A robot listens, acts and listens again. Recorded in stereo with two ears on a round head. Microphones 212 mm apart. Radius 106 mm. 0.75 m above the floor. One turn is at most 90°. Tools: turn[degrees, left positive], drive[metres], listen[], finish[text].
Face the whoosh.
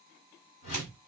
Thought: The whoosh: about 60° left or 120° left.
Action: turn[60]
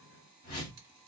Thought: So it is at 40° left.
Action: turn[40]
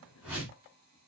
Action: finish[Facing the whoosh.]